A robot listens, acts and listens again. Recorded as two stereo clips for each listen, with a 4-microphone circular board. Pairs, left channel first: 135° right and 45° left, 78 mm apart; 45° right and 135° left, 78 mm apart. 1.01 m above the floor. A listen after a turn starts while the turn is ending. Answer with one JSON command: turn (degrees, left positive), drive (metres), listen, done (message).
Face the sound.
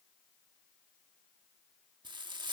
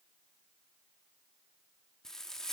{"turn": 40}
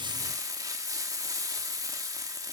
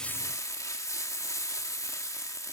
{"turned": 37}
{"done": "Facing the frying."}